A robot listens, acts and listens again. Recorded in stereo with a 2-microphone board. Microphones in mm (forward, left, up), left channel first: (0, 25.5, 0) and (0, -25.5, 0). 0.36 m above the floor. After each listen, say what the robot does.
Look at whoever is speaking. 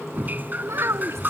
Turn 65° right.
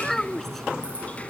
Facing the child speaking.